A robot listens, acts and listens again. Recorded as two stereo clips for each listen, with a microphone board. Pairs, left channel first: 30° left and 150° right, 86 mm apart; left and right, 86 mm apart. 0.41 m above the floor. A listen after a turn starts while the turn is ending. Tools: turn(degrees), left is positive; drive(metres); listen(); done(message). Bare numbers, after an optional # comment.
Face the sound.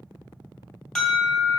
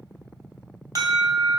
# The alarm: 50° right.
turn(-50)
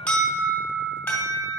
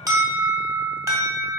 # The alarm is now 40° right.
turn(-40)
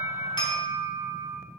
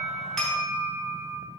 done("Facing the alarm.")